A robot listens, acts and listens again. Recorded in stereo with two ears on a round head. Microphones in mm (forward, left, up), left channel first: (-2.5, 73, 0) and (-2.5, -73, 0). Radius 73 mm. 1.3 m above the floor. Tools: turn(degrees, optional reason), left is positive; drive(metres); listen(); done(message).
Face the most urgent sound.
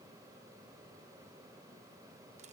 listen()
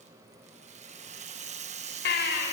turn(degrees=70, reason="The baby crying: about 70° left or 110° left.")
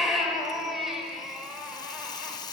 done("Found it: a baby crying, straight ahead.")